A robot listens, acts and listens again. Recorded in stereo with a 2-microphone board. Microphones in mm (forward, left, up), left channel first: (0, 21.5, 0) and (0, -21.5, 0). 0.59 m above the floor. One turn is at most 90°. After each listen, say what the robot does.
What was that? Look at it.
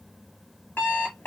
Turn 55° left.
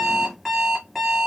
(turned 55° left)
Facing the alarm clock, 1 to 2 m away.